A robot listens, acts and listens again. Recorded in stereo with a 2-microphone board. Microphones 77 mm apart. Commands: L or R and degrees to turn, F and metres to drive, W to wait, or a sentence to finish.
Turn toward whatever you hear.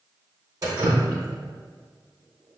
R55
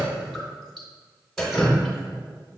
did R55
Facing the dripping, under 1 m away.